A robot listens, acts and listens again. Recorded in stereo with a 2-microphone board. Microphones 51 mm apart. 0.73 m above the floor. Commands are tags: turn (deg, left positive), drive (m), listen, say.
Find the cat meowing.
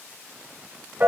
<listen/>
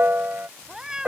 <turn deg="-30"/>
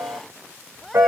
<say>Found it: a cat meowing, straight ahead.</say>